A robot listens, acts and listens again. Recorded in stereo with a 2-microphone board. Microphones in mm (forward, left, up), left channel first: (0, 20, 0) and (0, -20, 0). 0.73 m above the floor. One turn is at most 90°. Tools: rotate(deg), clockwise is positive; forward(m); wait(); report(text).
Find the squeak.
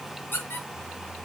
rotate(-55)
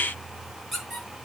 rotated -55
report("Facing the squeak.")